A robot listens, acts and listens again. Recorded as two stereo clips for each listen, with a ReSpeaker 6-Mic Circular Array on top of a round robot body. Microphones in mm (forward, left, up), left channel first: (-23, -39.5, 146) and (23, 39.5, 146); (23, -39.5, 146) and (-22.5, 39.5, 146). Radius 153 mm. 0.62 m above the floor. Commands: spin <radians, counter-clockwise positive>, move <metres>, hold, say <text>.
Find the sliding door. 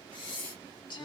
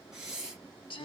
hold
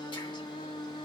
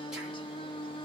hold
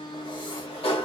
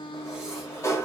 spin -2.09
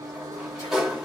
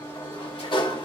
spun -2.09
spin -0.44
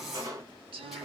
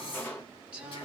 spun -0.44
spin 0.17
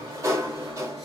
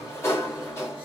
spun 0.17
say Facing the sliding door, 1 to 2 m away.